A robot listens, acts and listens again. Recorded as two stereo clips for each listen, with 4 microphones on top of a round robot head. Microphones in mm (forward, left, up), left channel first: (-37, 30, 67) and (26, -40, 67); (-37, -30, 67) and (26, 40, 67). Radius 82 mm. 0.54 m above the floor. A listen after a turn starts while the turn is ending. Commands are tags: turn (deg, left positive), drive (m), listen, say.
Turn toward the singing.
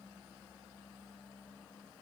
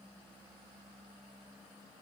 <listen/>
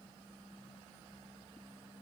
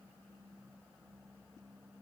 <listen/>
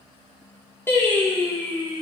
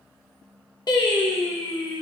<turn deg="-145"/>
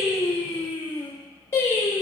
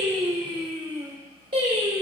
<turn deg="70"/>
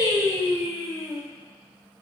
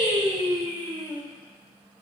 <turn deg="-25"/>
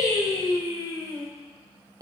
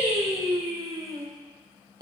<say>Found it: singing, straight ahead, 2 to 4 m away.</say>